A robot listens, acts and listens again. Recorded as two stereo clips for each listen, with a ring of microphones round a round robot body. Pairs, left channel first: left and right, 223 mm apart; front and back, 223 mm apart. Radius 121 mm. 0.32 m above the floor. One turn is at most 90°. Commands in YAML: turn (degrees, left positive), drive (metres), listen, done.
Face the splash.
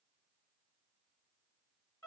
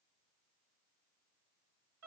listen: true
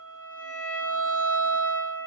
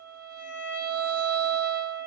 listen: true
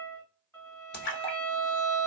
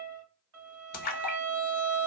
turn: 50
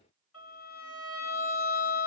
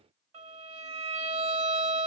done: "I heard a splash from this way, but can't make it out now."